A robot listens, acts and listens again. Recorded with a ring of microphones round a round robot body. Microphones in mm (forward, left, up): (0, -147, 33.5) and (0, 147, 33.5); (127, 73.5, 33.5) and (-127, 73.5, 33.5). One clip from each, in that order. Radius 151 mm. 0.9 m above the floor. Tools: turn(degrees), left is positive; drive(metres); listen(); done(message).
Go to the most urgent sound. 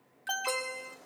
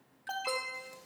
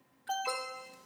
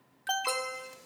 turn(degrees=-155)
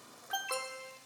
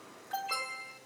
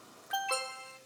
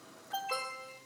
turn(degrees=-20)
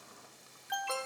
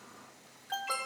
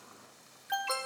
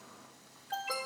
turn(degrees=-10)
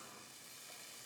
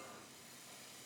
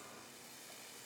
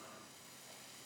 listen()
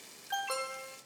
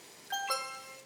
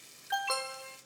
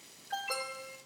drive(metres=1.0)
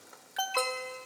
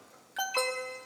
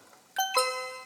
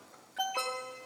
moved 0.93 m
turn(degrees=-10)
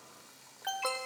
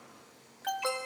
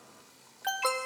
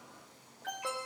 drive(metres=1.0)
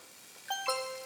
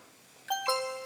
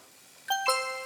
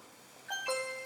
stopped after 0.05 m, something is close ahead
done("I am next to the alarm.")